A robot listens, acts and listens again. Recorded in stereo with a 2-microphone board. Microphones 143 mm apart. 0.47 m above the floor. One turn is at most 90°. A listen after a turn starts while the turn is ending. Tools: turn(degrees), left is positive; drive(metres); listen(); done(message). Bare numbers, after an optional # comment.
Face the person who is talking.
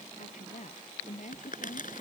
# The woman speaking: about 60° left or 120° left.
turn(60)
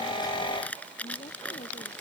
listen()
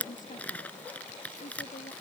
# So it is at 60° left.
turn(60)
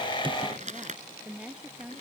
# The woman speaking is now 10° right.
turn(-10)
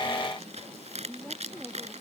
done("Facing the woman speaking.")